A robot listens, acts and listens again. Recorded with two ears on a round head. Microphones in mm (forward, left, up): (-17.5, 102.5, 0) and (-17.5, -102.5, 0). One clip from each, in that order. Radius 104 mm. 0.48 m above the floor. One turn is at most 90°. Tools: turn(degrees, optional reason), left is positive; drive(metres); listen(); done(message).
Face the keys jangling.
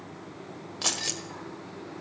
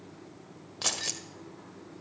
turn(degrees=-30)
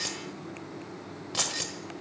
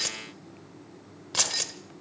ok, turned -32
turn(degrees=-90, reason="So it is at 145° right.")
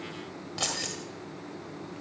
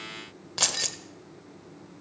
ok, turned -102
turn(degrees=-45, reason="The keys jangling is now 45° right.")
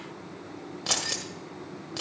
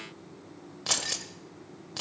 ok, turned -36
turn(degrees=-10, reason="The keys jangling is now 10° right.")
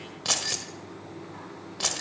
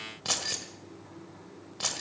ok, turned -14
done("Found it: keys jangling, straight ahead, 1 to 2 m away.")